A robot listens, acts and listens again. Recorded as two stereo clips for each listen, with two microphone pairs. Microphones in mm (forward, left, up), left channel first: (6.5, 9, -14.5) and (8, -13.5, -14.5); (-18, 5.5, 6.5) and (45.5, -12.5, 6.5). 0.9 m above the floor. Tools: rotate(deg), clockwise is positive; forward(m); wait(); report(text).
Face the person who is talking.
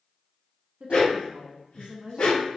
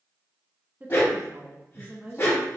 rotate(75)
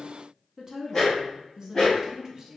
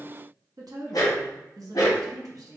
rotate(25)
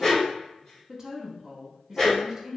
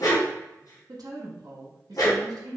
rotate(20)
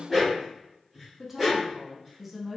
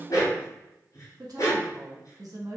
report("Found it: a woman speaking, straight ahead, 1 to 2 m away.")